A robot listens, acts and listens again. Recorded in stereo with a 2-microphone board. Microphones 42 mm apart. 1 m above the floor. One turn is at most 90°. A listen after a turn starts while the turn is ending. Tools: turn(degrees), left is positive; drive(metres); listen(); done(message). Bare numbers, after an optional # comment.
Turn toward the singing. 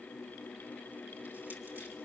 listen()
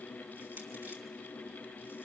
listen()
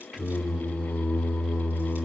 # The singing: about 25° right or 155° right.
turn(-25)
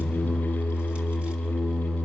# So it is at 130° right.
turn(-90)
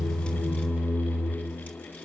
# The singing is now 50° right.
turn(-50)
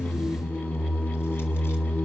# The singing is now 15° right.
turn(-15)
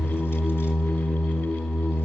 done("Facing the singing, over 4 m away.")